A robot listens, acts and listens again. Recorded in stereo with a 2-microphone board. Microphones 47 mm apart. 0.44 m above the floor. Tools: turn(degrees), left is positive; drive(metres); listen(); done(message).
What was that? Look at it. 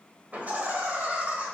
turn(degrees=-30)
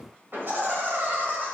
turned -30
turn(degrees=-135)
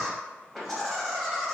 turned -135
done("Facing the laughter, 2 to 4 m away.")